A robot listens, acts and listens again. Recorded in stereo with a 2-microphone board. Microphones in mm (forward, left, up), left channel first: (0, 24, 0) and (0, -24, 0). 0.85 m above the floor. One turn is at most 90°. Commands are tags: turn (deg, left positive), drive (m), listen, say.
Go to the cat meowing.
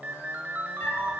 <turn deg="70"/>
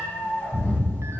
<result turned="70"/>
<turn deg="35"/>
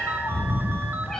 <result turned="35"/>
<turn deg="10"/>
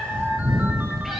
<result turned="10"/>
<drive m="1.0"/>
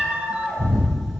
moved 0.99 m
<drive m="1.0"/>
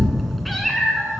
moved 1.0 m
<drive m="1.0"/>
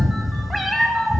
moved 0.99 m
<drive m="1.0"/>
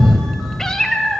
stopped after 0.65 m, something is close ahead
<turn deg="10"/>
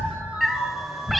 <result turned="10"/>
<say>Arrived at the cat meowing, straight ahead.</say>